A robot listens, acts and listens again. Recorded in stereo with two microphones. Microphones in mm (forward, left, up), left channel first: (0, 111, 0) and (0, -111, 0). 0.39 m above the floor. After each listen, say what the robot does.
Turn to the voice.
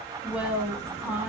Turn 30° right.
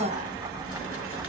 Turn 145° right.
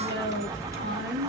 Turn 55° right.
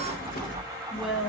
Facing the woman speaking.